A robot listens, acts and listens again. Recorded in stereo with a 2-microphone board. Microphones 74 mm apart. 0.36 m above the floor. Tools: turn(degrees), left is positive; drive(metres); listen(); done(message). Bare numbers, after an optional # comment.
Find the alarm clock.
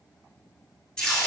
listen()
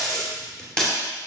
listen()
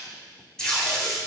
done("I can't make out an alarm clock, only tape being pulled.")